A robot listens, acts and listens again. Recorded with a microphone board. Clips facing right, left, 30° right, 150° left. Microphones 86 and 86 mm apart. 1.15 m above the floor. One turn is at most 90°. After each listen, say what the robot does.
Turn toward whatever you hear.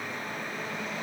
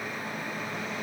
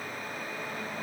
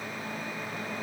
Keep listening.
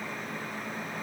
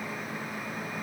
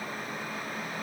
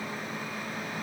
Keep listening.
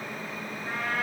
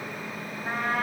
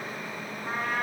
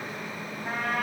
Turn 90° left.
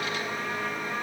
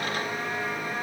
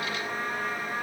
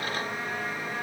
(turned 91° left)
Turn 40° left.
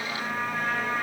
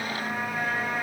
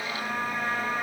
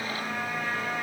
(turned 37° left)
Facing the trumpet, over 4 m away.